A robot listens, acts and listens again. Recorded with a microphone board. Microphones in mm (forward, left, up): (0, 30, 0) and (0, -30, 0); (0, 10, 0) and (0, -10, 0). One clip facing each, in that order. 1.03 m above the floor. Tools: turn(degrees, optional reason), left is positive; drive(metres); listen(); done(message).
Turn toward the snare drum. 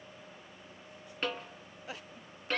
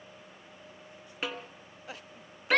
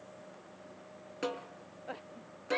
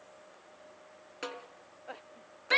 turn(degrees=-30)
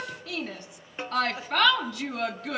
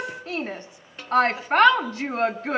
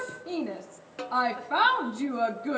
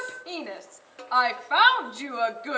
turn(degrees=25, reason="So it is at 25° left.")
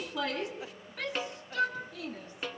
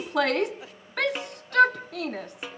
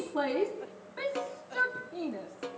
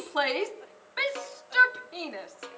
turn(degrees=-10, reason="The snare drum is now 10° right.")
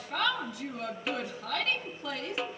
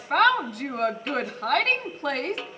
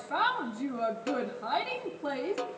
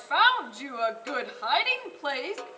done("Found it: a snare drum, straight ahead.")